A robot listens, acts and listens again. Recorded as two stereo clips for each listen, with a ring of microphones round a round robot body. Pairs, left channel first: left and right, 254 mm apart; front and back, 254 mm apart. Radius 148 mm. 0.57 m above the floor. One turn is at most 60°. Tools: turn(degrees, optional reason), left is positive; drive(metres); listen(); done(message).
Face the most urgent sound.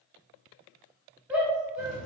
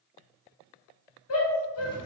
done("Facing the shout, 1 to 2 m away.")